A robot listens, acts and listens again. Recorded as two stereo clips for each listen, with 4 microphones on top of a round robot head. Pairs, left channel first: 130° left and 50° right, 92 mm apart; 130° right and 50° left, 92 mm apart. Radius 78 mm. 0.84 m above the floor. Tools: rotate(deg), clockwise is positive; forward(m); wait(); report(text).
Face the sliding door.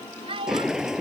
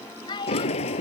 rotate(135)
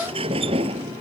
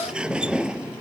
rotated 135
rotate(30)
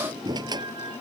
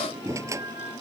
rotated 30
report("Found it: a sliding door, straight ahead.")